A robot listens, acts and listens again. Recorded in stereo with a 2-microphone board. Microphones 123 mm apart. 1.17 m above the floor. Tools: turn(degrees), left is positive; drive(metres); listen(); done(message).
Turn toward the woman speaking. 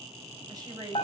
turn(degrees=-35)
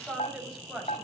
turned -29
done("Facing the woman speaking, over 4 m away.")